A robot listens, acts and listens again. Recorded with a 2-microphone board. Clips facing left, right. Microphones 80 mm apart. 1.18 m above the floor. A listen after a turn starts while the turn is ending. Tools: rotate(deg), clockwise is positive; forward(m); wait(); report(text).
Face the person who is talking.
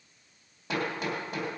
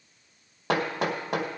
wait()
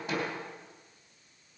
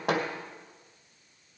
wait()
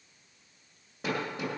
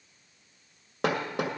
report("I can't make out anyone speaking, only hammering.")